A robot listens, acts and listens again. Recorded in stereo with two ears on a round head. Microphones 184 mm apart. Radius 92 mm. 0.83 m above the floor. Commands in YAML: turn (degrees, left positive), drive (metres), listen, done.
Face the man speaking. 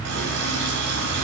listen: true
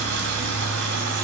listen: true
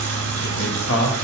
turn: 75
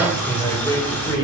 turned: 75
turn: 15
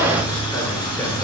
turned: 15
listen: true
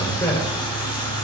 turn: 10
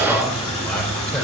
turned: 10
done: "Found it: a man speaking, straight ahead, 2 to 4 m away."